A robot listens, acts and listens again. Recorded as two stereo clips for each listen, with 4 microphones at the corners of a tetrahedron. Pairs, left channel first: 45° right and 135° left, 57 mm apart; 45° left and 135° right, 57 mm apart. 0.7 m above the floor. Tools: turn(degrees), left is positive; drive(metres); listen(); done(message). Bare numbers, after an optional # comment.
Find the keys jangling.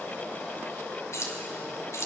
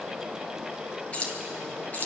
# The keys jangling: 15° right.
turn(-15)
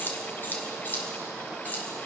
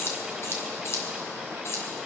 # The keys jangling is now 15° left.
turn(15)
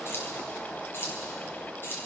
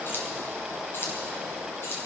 done("Found it: keys jangling, straight ahead, over 4 m away.")